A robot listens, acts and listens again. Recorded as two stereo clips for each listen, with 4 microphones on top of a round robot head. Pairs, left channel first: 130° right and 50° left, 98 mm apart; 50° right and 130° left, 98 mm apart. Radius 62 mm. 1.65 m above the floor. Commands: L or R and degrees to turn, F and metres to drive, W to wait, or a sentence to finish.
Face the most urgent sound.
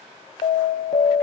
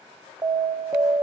R170
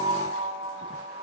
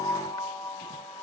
L10
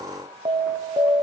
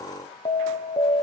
Found it: an alarm, straight ahead.